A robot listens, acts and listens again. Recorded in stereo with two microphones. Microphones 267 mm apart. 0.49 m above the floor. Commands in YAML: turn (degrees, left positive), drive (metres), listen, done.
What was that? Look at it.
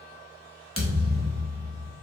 turn: 55
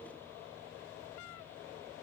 listen: true
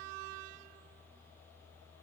done: "I heard a thud, but can't make it out now. It was about straight ahead or 70° left."